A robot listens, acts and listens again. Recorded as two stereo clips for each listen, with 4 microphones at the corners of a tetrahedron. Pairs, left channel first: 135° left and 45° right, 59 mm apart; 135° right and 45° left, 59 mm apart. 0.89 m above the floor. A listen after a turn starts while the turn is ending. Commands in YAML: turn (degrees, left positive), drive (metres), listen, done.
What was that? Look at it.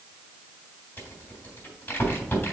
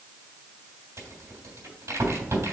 turn: 75
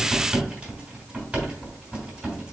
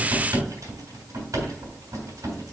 turn: 20
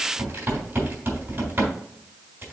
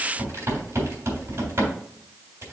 done: "Found it: a rattle, straight ahead, 2 to 4 m away."